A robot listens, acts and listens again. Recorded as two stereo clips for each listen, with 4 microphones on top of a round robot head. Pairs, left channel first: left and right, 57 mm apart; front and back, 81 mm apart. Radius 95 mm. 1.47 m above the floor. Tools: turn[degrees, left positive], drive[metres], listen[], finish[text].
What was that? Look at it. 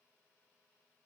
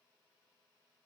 Action: listen[]
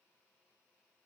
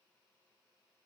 Action: listen[]
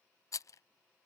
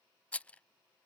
Thought: The rattle: 75° left.
Action: turn[75]
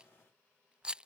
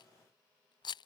Thought: The rattle is now 15° right.
Action: turn[-15]
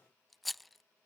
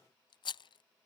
Action: finish[Facing the rattle.]